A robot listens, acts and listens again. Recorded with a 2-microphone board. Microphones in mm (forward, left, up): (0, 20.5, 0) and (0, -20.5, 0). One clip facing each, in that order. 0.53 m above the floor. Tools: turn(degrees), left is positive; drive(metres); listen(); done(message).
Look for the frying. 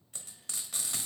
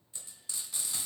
turn(degrees=60)
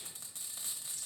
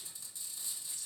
turn(degrees=60)
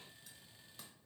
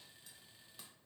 listen()
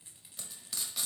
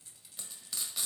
done("Found it: frying, straight ahead, under 1 m away.")